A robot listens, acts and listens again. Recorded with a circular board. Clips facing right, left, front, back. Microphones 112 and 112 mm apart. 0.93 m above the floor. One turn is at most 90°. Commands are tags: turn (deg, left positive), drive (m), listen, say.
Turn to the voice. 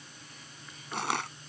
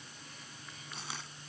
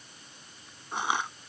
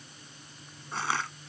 <listen/>
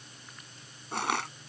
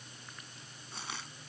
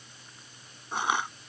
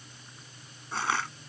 <listen/>
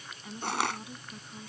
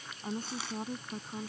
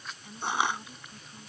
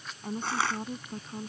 <turn deg="90"/>
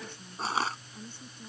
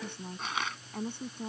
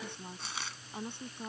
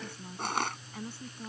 <turn deg="65"/>
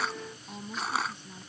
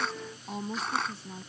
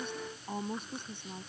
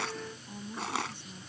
<turn deg="35"/>
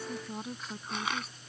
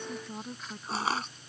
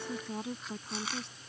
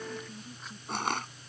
<say>Found it: a woman speaking, straight ahead.</say>